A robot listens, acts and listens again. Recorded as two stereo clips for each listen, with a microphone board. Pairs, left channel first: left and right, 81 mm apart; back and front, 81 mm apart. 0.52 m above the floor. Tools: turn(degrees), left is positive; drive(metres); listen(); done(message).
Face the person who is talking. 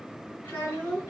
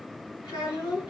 turn(degrees=155)
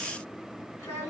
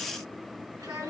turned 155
turn(degrees=40)
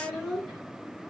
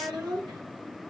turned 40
done("Found it: a child speaking, straight ahead, 2 to 4 m away.")